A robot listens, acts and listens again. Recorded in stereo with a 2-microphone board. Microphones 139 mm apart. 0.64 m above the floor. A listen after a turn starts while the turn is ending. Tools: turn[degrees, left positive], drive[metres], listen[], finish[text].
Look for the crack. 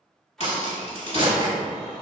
Thought: The crack: about 50° left or 130° left.
Action: turn[50]
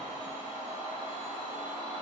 Action: listen[]
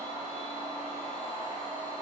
Action: finish[I heard a crack, but can't make it out now. It was about straight ahead or 80° left.]